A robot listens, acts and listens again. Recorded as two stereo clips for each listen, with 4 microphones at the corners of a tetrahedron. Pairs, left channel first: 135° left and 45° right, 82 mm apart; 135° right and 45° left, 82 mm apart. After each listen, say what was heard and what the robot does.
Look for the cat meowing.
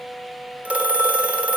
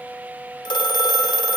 Keep listening.
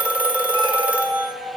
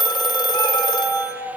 The cat meowing: 70° right. Turn 70° right.
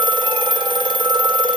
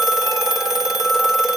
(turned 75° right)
Keep listening.
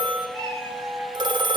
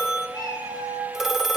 Found it: a cat meowing, straight ahead.